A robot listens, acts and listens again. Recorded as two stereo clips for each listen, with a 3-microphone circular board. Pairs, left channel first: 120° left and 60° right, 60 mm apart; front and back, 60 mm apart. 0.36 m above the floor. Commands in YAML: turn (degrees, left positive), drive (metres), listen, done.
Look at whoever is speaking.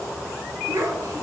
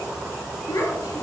turn: -30
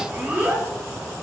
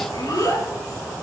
done: "Facing the child speaking."